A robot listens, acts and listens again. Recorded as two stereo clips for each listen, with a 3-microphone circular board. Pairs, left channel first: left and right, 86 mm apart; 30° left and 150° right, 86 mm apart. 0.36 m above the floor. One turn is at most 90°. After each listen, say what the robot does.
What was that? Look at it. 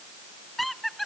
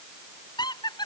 Found it: laughter, straight ahead.